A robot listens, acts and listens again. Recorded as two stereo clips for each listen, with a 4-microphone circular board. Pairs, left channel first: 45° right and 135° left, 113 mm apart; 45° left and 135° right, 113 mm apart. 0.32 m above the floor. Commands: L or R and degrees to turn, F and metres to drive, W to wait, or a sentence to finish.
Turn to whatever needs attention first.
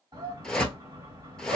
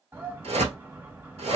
L165
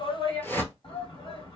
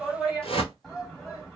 R45
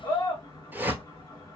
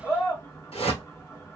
Facing the shout.